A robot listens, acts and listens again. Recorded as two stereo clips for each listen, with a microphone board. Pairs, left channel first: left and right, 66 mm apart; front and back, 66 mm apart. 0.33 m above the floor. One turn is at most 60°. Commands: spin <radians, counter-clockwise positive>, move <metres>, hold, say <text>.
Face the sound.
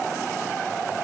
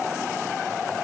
hold
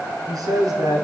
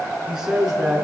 spin -1.05
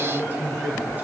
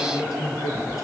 spin -0.44
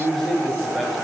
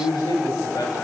say Found it: a man speaking, straight ahead, over 4 m away.